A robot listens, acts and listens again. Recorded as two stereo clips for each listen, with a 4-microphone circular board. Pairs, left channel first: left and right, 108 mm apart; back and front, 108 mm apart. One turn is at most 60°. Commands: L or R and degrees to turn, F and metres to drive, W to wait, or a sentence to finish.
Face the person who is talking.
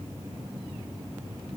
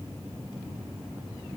W
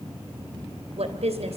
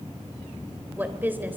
R60
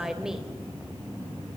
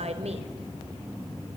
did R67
W
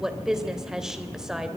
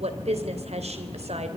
Found it: a woman speaking, straight ahead.